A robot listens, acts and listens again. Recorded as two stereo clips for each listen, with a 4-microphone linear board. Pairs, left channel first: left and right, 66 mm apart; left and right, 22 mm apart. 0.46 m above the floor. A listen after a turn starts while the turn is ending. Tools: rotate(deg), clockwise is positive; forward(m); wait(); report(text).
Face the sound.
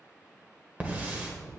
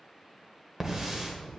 rotate(25)
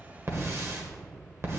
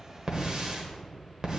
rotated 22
rotate(130)
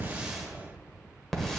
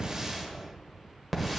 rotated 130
report("Facing the hiss, 1 to 2 m away.")